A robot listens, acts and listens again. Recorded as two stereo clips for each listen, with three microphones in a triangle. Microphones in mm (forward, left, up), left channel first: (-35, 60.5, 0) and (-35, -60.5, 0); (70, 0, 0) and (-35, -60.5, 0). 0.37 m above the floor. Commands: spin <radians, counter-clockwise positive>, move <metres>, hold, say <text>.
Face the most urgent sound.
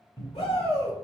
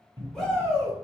spin 1.92
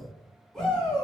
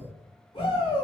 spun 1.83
say Facing the shout, 1 to 2 m away.